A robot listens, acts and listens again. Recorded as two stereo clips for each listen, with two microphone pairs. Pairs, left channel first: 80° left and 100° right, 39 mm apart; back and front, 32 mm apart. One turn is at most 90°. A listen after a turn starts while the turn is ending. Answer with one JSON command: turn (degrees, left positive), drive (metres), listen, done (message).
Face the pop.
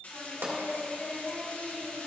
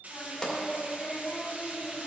{"turn": -90}
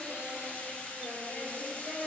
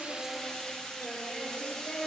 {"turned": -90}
{"turn": -25}
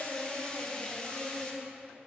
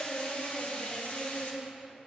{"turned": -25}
{"done": "Facing where the pop came from. I can't hear it now."}